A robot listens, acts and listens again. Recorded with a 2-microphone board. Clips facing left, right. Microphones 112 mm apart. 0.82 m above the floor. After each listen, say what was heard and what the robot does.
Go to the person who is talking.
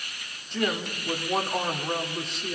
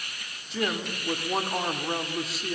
Turn 30° right.
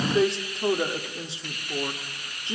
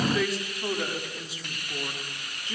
So it is at 30° left. Turn 30° left.
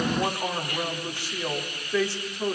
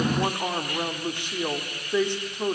The woman speaking is now 20° right. Turn 20° right.
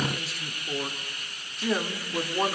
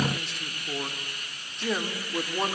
Drive 1.0 m forward.
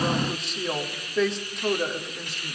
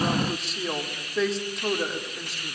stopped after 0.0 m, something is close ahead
Something is in my way. I am facing the woman speaking but have not reached it.